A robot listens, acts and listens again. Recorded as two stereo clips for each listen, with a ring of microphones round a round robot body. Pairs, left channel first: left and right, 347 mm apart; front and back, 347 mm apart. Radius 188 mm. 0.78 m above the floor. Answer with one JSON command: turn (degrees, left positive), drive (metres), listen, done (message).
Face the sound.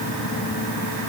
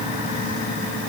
{"listen": true}
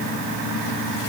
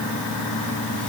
{"listen": true}
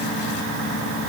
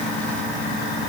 {"done": "I can't make out anything to turn to."}